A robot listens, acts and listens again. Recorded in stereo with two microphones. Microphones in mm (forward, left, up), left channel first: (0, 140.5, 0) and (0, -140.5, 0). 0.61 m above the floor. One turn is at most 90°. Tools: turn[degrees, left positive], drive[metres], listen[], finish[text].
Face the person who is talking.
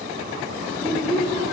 Action: turn[30]
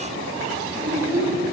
Thought: So it is at 30° right.
Action: turn[-30]
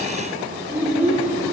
Action: finish[Facing the child speaking.]